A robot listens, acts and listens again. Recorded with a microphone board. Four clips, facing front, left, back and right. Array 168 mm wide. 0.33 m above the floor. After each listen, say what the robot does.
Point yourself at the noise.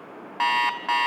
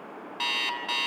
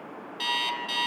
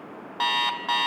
Turn 30° right.
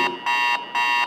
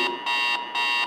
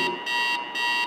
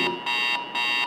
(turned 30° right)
Turn 10° left.
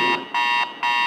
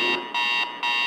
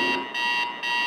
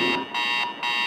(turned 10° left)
Found it: an alarm clock, straight ahead, 1 to 2 m away.